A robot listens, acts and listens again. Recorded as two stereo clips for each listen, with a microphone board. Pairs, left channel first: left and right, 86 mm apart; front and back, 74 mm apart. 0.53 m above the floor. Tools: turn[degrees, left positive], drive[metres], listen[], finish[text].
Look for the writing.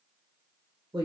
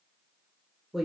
Action: listen[]
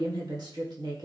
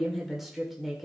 Action: listen[]
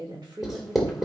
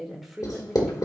Action: finish[Facing the writing, 1 to 2 m away.]